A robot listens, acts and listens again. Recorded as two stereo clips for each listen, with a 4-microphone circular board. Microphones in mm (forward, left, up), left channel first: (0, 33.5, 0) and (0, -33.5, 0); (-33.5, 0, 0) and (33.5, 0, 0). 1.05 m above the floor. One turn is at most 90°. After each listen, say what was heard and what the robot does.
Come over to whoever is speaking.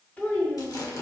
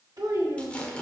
The child speaking: 20° left. Turn 20° left.
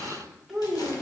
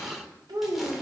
Drive 1.0 m forward.
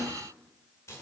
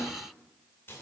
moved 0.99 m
Keep listening.
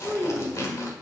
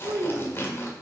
Drive 1.0 m forward.
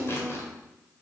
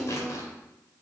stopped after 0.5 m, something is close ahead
Arrived at the child speaking, straight ahead.